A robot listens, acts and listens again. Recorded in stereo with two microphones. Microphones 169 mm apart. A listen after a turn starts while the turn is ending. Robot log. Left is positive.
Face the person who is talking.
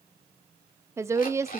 note: The woman speaking: about 15° right or 165° right.
cmd yaw -15
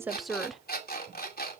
end: Facing the woman speaking, under 1 m away.